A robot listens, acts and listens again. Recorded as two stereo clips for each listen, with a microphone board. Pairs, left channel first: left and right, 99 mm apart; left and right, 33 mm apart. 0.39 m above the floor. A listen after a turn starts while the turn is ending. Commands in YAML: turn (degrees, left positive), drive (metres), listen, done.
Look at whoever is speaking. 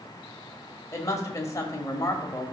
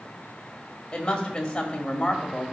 turn: 30
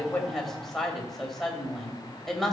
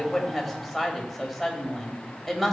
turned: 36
done: "Found it: a woman speaking, straight ahead."